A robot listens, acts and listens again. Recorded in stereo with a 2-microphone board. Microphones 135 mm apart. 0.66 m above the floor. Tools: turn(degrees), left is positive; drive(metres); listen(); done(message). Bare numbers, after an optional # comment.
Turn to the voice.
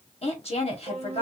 # The woman speaking: about 50° left or 130° left.
turn(50)
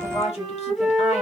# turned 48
# So it is at 70° left.
turn(70)
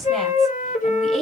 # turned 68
done("Found it: a woman speaking, straight ahead, 1 to 2 m away.")